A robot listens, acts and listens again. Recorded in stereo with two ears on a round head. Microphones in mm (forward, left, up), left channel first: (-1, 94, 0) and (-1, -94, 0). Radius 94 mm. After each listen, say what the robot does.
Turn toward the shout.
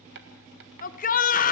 Turn 40° left.
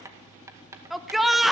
Found it: a shout, straight ahead, 1 to 2 m away.